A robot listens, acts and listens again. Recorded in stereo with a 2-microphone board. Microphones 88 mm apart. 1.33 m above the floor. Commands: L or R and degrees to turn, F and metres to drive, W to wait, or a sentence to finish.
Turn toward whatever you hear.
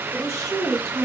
R35
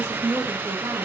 R125
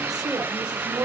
R65
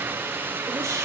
W
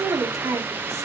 R40
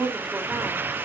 Facing the woman speaking, 1 to 2 m away.